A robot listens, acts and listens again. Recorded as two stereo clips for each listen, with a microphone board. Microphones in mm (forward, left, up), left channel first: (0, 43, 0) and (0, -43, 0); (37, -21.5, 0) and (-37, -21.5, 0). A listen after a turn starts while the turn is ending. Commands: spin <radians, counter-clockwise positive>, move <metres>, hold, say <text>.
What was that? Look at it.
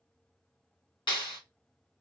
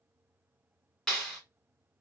spin 1.48
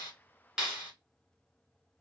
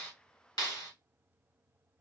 say Found it: a clap, straight ahead.